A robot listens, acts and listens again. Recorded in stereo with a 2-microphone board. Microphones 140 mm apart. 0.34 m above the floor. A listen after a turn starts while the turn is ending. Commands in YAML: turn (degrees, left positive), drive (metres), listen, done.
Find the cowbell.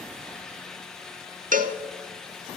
turn: -90
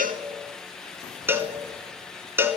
turn: -15
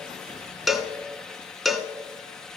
done: "Found it: a cowbell, straight ahead, under 1 m away."